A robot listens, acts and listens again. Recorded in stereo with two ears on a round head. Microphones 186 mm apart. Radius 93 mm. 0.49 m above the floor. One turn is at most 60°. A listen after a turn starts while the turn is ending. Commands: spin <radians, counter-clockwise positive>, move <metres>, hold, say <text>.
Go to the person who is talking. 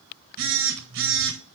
hold
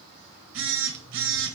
hold
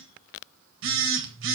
say I can't make out anyone speaking, only a phone buzzing.